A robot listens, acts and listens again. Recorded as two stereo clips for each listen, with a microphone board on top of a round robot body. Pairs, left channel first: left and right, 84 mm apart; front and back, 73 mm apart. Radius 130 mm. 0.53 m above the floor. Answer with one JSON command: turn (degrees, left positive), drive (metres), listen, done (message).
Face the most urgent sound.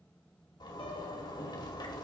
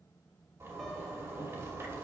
{"listen": true}
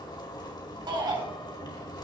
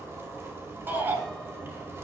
{"turn": -120}
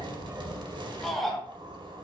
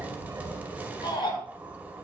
{"done": "Facing the shout."}